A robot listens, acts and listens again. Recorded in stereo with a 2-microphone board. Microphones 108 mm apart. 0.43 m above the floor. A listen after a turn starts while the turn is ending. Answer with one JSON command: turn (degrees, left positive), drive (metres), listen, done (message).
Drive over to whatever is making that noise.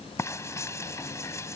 {"turn": 25}
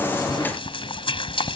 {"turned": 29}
{"turn": 125}
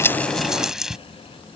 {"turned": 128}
{"drive": 1.0}
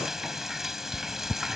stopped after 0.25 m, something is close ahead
{"done": "Something is in my way. I am facing the frying but have not reached it."}